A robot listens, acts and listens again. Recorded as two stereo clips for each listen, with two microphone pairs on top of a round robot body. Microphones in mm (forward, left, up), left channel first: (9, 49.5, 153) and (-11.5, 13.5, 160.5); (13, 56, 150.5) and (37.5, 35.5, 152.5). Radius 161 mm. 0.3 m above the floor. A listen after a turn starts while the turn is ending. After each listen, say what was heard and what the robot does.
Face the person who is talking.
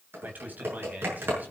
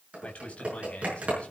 The man speaking: 170° right. Turn 170° right.
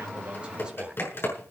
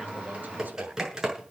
Keep listening.
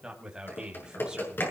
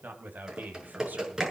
The man speaking is now 50° right. Turn 50° right.
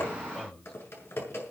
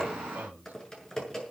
The man speaking is now 15° right. Turn 15° right.
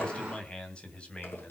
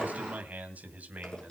Facing the man speaking.